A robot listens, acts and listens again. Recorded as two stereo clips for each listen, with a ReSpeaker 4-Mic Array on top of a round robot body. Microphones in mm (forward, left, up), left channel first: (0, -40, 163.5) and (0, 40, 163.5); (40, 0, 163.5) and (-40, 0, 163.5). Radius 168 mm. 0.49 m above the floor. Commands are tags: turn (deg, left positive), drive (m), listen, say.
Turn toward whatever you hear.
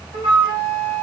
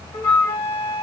<turn deg="70"/>
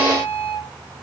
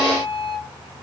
<turn deg="20"/>
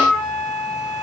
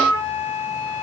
<say>Facing the flute, 1 to 2 m away.</say>